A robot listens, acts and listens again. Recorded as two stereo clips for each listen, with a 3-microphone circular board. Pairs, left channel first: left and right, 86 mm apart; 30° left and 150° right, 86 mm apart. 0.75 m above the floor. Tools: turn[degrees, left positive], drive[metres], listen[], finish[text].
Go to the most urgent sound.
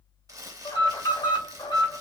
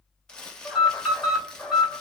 Thought: The alarm: 120° left.
Action: turn[120]
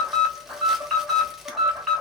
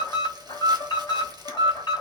Action: drive[1.0]
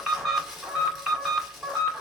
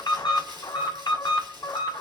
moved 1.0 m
Action: drive[1.0]
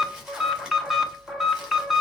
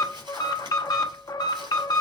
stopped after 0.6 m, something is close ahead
Action: finish[Arrived at the alarm, straight ahead.]